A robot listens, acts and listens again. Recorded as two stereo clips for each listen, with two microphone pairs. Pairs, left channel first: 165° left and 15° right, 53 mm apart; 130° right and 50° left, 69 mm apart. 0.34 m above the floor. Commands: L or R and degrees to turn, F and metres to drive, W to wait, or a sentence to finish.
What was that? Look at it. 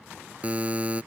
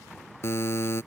R80
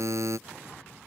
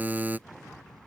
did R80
R15
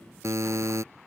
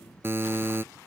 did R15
Found it: a buzzer, straight ahead.